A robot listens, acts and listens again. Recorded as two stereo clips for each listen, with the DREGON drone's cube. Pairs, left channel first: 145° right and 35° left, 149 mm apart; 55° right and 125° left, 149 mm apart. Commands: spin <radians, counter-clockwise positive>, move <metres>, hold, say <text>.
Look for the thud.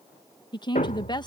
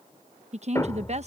spin -2.09
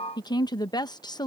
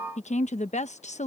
say Facing where the thud came from. I can't hear it now.